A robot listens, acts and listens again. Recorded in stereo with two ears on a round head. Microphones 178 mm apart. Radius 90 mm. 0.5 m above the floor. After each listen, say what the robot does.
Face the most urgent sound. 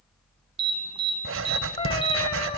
Turn 30° right.
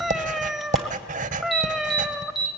Facing the alarm, 2 to 4 m away.